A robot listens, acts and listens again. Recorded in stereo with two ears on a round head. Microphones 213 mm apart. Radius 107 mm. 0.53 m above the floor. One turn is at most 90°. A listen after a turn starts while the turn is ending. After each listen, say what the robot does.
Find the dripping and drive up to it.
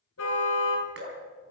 Turn 50° right.
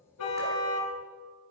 Keep listening.
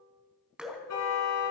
Drive 1.0 m forward.
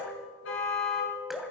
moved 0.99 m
Drive 1.0 m forward.
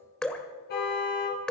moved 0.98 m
Drive 1.0 m forward.
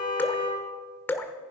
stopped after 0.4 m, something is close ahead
Turn 10° left.
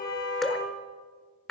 I am next to the dripping.